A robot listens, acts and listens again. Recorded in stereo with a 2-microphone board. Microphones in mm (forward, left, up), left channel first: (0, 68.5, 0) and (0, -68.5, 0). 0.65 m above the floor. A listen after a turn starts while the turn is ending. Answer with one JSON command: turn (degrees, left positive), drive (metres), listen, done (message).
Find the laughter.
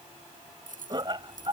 {"turn": -35}
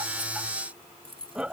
{"done": "Found it: laughter, straight ahead."}